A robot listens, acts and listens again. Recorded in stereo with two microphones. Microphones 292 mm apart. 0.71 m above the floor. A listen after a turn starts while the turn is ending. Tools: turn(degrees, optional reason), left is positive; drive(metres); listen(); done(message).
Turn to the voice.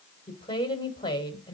turn(degrees=15, reason="The woman speaking: about 15° left or 165° left.")
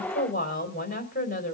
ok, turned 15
turn(degrees=150, reason="So it is at 150° left.")
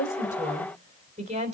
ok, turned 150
turn(degrees=-25, reason="The woman speaking is now 25° right.")
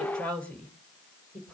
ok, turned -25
done("Facing the woman speaking.")